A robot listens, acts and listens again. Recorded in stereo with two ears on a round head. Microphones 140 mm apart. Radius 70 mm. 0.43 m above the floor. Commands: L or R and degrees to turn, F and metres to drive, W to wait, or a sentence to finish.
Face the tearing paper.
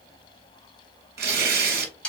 R70
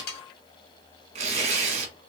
R45
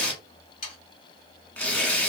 L10
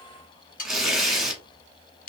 Found it: tearing paper, straight ahead.